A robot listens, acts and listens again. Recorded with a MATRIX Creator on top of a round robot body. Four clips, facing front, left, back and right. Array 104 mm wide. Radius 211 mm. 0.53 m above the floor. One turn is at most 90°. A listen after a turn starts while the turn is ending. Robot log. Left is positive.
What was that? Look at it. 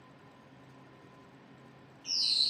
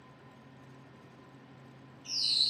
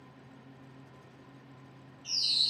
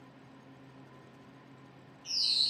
note: The bird: 10° right.
cmd yaw -10
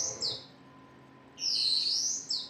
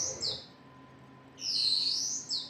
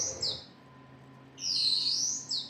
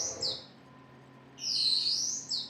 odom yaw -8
end: Facing the bird.